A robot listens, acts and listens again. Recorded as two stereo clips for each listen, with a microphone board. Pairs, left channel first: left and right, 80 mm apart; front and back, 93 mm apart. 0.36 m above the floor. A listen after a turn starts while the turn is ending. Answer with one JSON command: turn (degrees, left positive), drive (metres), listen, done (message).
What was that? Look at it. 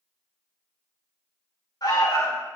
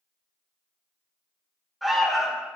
{"turn": 90}
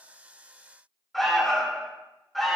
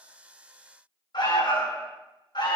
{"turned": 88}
{"done": "Found it: an alarm, straight ahead, 2 to 4 m away."}